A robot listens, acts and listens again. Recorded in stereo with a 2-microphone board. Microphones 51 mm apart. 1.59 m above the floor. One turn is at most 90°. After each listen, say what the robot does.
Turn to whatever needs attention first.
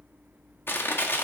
Keep listening.
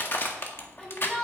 Turn 30° left.
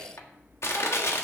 Keep listening.
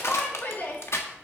Turn 90° left.
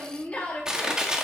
Turn 25° left.
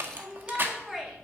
Turn 10° right.
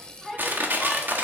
Found it: a shout, straight ahead.